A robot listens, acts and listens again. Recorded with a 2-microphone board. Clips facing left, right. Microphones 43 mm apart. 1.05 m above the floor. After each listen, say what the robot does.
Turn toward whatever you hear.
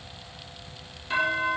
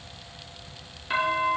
Turn 20° right.
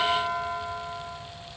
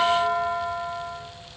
Turn 140° right.
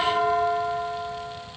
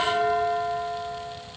Facing the doorbell.